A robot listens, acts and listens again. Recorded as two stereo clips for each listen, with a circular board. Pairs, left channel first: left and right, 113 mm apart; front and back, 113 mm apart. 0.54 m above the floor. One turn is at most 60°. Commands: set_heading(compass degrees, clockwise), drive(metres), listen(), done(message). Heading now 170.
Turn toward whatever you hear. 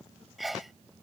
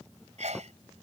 set_heading(110)
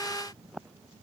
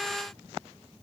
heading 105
set_heading(45)
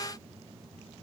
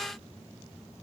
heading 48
set_heading(348)
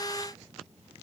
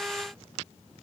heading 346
done("I heard a sneeze from this way, but can't make it out now.")